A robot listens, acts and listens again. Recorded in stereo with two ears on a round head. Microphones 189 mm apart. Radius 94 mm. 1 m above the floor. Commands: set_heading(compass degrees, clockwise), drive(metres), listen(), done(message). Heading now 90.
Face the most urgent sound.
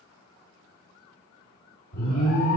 set_heading(45)
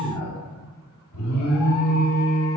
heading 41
set_heading(316)
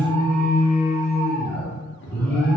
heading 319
done("Found it: an alarm, straight ahead.")